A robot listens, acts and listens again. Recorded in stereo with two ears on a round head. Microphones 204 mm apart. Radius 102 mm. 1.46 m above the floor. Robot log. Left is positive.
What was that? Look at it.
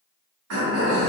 note: The throat clearing: about 65° right or 115° right.
cmd yaw -65
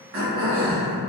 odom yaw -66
note: So it is at 45° right.
cmd yaw -45
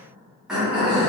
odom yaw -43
end: Found it: throat clearing, straight ahead, 1 to 2 m away.